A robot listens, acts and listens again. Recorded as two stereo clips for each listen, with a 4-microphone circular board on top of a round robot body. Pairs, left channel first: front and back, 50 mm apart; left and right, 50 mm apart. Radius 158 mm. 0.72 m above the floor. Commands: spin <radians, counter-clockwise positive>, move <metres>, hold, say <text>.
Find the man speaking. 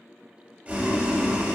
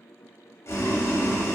hold
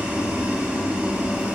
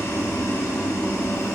hold
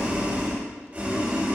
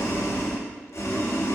say I can't make out a man speaking, only boiling.